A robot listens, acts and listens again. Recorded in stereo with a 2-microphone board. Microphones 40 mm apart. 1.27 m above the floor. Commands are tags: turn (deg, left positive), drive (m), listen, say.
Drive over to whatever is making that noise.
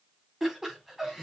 <turn deg="-30"/>
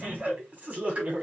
<turn deg="-145"/>
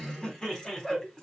<turn deg="15"/>
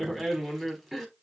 <drive m="1.0"/>
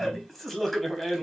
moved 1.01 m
<drive m="1.0"/>
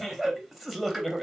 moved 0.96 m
<drive m="1.0"/>
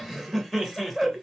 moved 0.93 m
<drive m="1.0"/>
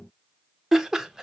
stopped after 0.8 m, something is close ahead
<turn deg="-10"/>
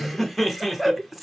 <say>I am next to the laughter.</say>